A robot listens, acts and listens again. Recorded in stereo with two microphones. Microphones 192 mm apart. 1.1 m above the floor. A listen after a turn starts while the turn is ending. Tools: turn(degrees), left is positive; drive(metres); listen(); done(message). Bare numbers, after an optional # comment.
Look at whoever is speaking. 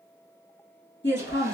# The woman speaking: about 65° left or 115° left.
turn(65)
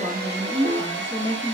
done("Facing the woman speaking.")